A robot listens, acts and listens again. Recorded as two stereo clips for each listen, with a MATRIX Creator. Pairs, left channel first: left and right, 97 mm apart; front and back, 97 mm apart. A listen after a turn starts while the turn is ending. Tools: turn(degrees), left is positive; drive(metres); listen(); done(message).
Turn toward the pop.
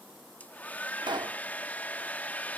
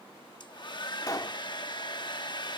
turn(degrees=-50)
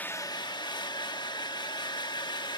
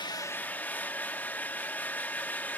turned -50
done("I heard a pop from this way, but can't make it out now.")